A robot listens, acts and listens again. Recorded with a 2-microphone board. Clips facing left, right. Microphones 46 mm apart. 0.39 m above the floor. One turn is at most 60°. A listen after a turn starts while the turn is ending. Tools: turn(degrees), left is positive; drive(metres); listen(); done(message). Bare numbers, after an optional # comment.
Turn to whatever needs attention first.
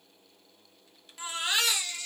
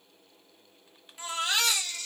turn(30)
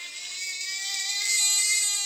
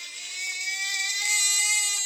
# So it is at 20° right.
turn(-20)
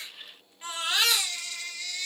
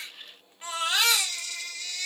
done("Found it: a baby crying, straight ahead, 2 to 4 m away.")